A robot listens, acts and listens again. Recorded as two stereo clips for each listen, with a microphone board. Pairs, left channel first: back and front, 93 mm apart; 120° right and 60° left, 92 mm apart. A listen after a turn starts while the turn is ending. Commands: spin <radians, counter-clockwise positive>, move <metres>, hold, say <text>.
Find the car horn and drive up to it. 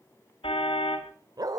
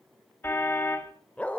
spin 3.05
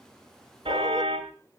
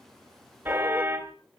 spin -0.17
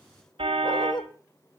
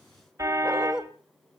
move 1.0
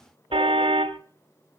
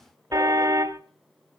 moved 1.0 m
spin 0.17
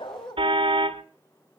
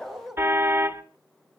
move 1.0
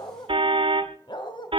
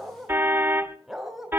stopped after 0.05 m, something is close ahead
say I am next to the car horn.